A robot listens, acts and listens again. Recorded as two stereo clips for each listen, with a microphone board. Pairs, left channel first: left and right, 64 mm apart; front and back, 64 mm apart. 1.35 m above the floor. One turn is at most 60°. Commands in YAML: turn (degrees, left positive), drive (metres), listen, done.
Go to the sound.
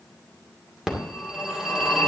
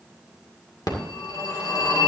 turn: -10
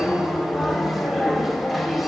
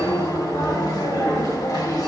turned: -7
drive: 1.0
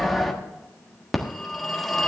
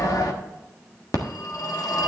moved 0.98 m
drive: 1.0
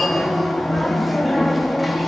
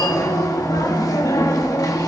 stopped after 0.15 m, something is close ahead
done: "I am next to the phone ringing."